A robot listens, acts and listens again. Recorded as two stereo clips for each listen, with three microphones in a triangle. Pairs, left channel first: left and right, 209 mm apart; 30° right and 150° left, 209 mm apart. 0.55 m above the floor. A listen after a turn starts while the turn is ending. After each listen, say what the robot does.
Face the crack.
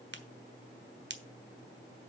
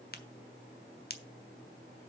Turn 65° right.
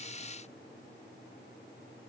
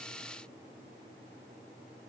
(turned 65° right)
Facing where the crack came from. I can't hear it now.